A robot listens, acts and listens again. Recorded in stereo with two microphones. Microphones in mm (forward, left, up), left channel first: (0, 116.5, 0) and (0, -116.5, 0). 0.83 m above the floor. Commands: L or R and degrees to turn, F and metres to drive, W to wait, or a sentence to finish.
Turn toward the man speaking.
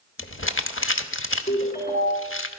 W
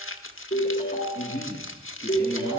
L60
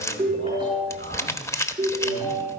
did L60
W
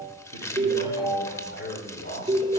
L55
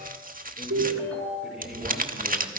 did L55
W
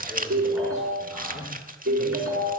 Found it: a man speaking, straight ahead.